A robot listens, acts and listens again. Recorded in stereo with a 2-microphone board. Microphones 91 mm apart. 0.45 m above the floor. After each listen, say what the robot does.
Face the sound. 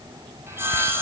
Turn 25° right.
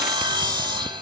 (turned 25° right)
Turn 130° right.
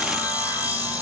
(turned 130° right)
Turn 20° right.
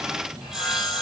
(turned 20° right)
Found it: sawing, straight ahead, over 4 m away.